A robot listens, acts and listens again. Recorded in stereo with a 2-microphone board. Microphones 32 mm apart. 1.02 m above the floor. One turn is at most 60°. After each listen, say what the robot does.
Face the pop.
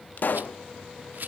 Turn 60° left.
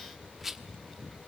Keep listening.
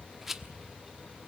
I heard a pop, but can't make it out now. It was about 5° left or 55° left.